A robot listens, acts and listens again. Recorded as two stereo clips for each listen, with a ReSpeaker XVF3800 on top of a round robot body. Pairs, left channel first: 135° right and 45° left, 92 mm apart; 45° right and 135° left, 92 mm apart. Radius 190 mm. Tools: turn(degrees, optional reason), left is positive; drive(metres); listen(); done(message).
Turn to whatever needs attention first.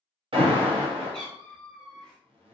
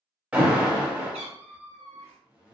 turn(degrees=55, reason="The alarm: 55° left.")
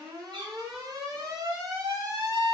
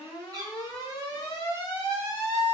done("Facing the alarm.")